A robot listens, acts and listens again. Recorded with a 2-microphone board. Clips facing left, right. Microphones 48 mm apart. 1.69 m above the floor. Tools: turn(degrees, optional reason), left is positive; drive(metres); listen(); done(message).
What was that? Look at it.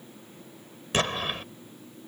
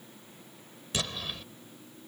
turn(degrees=45, reason="The explosion: about 45° left or 135° left.")
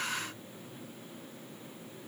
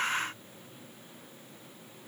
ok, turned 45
listen()
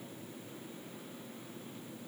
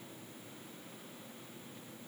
done("I heard an explosion, but can't make it out now. It was about straight ahead or 90° left.")